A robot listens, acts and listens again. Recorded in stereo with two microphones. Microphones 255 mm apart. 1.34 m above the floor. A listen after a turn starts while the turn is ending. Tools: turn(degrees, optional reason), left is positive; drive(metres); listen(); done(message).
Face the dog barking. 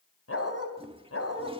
turn(degrees=75, reason="The dog barking: about 75° left or 105° left.")
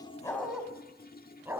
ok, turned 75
turn(degrees=-10, reason="So it is at 10° right.")
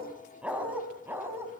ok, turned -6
turn(degrees=-10, reason="The dog barking is now 10° right.")
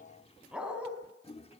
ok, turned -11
done("Found it: a dog barking, straight ahead.")